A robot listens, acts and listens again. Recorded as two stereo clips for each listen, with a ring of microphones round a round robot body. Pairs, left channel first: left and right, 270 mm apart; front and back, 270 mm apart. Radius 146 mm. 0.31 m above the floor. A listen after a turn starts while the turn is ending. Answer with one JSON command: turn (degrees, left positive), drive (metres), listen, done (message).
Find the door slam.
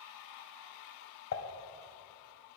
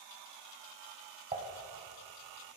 {"listen": true}
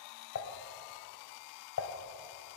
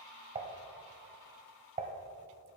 {"listen": true}
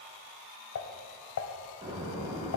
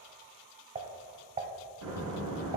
{"turn": -165}
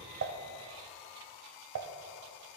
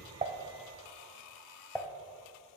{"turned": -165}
{"done": "I heard a door slam from this way, but can't make it out now."}